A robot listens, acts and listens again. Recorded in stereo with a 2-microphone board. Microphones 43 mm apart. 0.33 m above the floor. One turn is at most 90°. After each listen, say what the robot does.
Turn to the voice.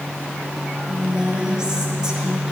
Turn 30° right.
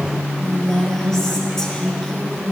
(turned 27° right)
Turn 15° left.
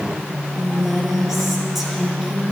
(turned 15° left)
Found it: a woman speaking, straight ahead, over 4 m away.